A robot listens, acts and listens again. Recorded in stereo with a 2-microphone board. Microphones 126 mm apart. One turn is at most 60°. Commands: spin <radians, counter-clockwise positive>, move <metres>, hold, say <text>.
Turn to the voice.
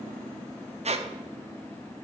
hold
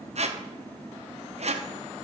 hold
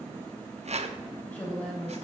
spin 0.52
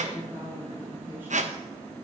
hold
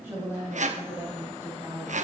spin -0.26
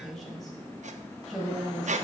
say Found it: a woman speaking, straight ahead, over 4 m away.